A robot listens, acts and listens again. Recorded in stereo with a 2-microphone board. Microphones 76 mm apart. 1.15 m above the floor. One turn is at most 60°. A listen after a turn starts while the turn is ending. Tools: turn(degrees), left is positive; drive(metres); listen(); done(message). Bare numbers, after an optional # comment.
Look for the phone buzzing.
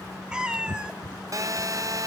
# The phone buzzing: about 45° right or 135° right.
turn(-45)
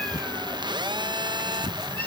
# So it is at 85° right.
turn(-60)
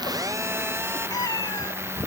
# The phone buzzing is now 35° right.
turn(-35)
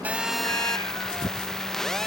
done("Facing the phone buzzing.")